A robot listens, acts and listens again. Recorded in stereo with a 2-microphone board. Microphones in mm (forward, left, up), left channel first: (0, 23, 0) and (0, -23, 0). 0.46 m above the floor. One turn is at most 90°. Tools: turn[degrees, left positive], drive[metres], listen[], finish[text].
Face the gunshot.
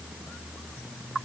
Action: listen[]
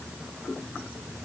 Action: listen[]
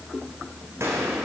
Thought: The gunshot: about 75° right or 105° right.
Action: turn[-75]
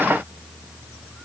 Action: listen[]
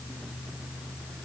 Action: finish[I heard a gunshot, but can't make it out now. It was about straight ahead or 30° right.]